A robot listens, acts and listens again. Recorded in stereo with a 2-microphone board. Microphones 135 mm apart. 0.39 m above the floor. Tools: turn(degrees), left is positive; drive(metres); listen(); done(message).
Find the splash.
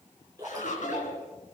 turn(degrees=-25)
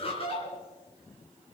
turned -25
listen()
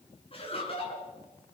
done("I heard a splash, but can't make it out now. It was about straight ahead or 130° right.")